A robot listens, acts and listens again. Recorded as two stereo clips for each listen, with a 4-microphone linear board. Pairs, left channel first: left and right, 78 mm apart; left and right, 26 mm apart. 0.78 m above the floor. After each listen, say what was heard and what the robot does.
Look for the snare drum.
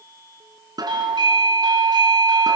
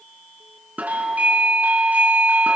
The snare drum: about 60° right or 120° right. Turn 60° right.
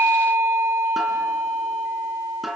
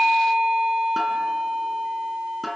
Found it: a snare drum, straight ahead, 2 to 4 m away.